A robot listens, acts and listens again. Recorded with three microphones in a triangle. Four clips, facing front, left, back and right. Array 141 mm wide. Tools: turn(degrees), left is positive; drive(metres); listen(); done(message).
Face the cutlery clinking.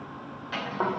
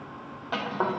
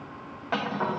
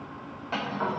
turn(degrees=165)
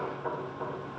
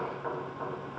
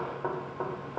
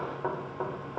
listen()
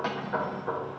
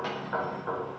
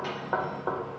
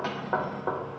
turn(degrees=-30)
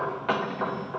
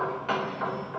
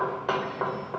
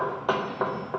listen()
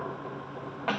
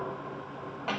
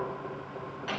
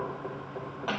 turn(degrees=-10)
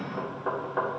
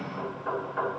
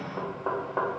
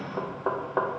listen()
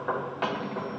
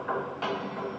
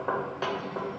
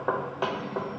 listen()
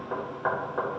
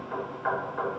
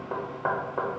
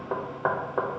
done("I heard cutlery clinking from this way, but can't make it out now.")